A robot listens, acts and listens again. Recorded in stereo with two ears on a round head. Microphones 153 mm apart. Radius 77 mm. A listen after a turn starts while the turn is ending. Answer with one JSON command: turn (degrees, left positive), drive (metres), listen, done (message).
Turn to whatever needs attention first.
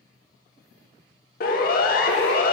{"turn": 55}
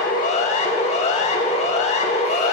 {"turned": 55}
{"turn": 45}
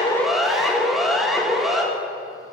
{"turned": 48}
{"done": "Facing the siren."}